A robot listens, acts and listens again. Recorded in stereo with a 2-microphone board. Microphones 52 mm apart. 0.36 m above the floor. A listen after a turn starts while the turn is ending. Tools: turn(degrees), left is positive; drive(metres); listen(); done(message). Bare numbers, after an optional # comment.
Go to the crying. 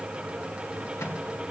listen()
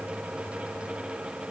listen()
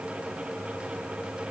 done("I can't make out crying.")